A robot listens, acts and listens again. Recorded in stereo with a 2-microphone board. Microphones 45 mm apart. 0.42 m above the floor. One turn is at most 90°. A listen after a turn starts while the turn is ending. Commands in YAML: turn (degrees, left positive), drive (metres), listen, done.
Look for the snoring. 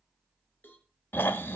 turn: 60
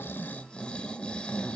turn: 30
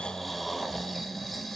done: "Facing the snoring."